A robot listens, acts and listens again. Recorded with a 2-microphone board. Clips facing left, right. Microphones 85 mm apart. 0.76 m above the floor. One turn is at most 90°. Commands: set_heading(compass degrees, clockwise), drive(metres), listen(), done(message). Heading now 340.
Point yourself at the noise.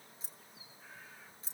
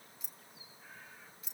set_heading(305)
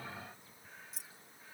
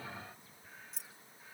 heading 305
done("Found it: keys jangling, straight ahead.")